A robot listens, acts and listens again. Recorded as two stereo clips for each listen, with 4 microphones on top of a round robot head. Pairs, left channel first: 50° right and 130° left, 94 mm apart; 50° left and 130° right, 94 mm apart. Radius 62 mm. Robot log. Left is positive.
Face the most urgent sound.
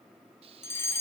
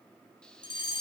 note: The fire alarm: 15° left.
cmd yaw +15
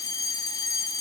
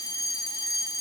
end: Found it: a fire alarm, straight ahead.